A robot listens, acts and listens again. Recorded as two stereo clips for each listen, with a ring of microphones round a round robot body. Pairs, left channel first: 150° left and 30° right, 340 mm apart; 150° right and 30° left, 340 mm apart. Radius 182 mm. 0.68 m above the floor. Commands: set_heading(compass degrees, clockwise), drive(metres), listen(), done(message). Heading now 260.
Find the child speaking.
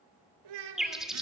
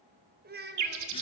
set_heading(290)
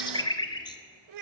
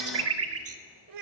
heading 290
done("Found it: a child speaking, straight ahead.")